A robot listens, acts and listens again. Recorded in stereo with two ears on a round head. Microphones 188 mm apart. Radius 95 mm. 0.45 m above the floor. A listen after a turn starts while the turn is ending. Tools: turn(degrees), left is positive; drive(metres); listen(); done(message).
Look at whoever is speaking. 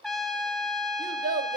turn(degrees=-40)
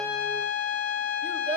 turn(degrees=-10)
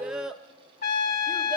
done("Facing the child speaking.")